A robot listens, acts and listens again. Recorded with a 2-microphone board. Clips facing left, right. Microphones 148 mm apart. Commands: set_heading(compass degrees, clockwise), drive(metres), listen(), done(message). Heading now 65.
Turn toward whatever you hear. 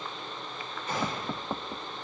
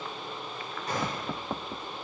set_heading(110)
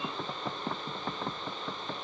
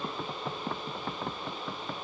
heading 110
listen()
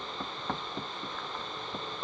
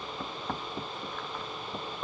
done("I heard a gunshot, but can't make it out now. It was about straight ahead or 90° right.")